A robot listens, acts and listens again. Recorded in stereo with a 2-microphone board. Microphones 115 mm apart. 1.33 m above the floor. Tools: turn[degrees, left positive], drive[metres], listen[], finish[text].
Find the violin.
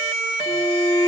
Thought: The violin: about 40° left or 140° left.
Action: turn[40]
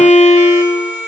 Thought: So it is at 100° left.
Action: turn[100]
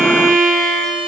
Action: finish[Found it: a violin, straight ahead, over 4 m away.]